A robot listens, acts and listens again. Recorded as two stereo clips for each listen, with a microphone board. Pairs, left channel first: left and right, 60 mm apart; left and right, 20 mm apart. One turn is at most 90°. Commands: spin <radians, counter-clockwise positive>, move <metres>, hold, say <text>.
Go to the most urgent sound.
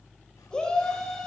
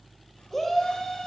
spin 0.52
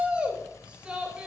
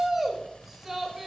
spin -0.26
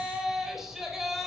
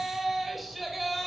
move 1.0
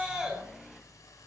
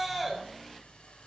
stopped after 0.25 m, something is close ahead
spin -0.17
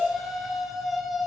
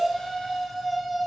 say Blocked. The shout is further on, straight ahead.